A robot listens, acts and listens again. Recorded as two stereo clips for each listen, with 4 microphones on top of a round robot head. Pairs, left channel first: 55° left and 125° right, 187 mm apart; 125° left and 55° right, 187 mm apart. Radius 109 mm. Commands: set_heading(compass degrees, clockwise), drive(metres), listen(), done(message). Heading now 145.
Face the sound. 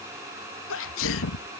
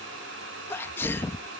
set_heading(100)
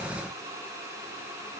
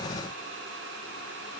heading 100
done("I heard a sneeze from this way, but can't make it out now.")